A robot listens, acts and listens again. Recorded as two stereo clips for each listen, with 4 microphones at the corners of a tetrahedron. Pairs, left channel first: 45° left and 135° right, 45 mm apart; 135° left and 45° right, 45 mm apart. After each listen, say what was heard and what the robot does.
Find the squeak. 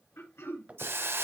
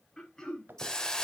The squeak: 80° right. Turn 80° right.
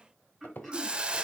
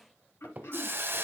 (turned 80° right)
Facing the squeak, under 1 m away.